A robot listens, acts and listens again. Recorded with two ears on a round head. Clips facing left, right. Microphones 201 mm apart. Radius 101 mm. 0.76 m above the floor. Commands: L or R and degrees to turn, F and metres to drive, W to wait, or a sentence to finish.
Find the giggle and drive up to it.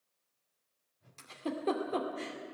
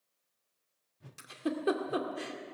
R15
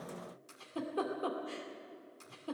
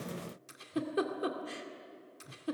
R155
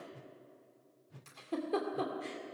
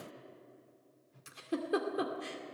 R15
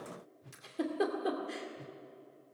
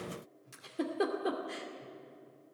F1.0
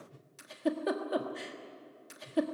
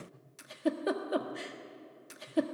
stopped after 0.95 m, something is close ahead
Arrived at the giggle, straight ahead.